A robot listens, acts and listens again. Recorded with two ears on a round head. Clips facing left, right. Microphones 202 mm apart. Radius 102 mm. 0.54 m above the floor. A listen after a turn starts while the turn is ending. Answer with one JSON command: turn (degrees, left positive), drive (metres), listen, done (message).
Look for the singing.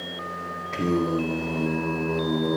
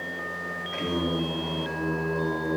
{"turn": 50}
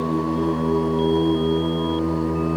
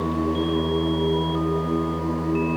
{"turn": 80}
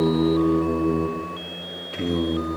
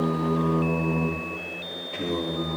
{"turn": 25}
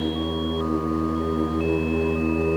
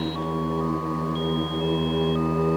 {"turn": 15}
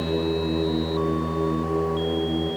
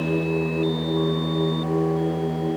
{"done": "Facing the singing."}